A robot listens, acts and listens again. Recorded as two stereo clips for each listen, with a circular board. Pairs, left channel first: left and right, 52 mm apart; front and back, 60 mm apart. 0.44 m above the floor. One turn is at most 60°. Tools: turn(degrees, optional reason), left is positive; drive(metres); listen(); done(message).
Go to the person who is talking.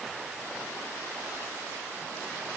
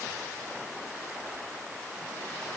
listen()
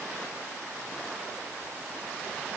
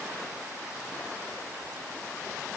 listen()
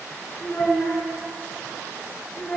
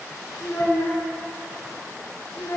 turn(degrees=55, reason="The child speaking: 55° left.")
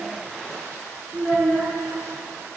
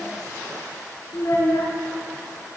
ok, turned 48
turn(degrees=10, reason="The child speaking is now 10° left.")
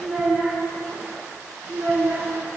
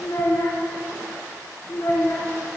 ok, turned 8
drive(metres=1.0)
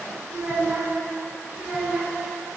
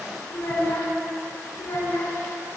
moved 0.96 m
drive(metres=1.0)
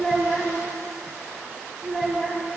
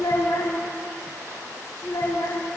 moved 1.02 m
drive(metres=1.0)
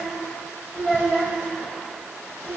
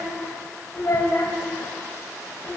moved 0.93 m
drive(metres=1.0)
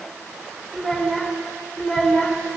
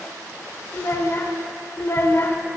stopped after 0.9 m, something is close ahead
turn(degrees=10, reason="The child speaking is now 10° left.")
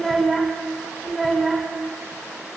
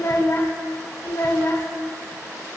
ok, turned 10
done("I am next to the child speaking.")